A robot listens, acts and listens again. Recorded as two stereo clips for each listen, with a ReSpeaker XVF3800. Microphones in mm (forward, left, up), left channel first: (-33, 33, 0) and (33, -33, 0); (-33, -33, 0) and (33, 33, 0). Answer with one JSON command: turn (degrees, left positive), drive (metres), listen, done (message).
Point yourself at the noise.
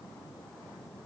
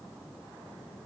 {"listen": true}
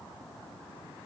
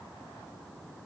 {"listen": true}
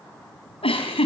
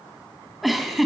{"turn": 135}
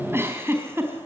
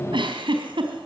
{"turn": 20}
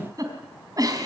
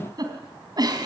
{"done": "Facing the giggle."}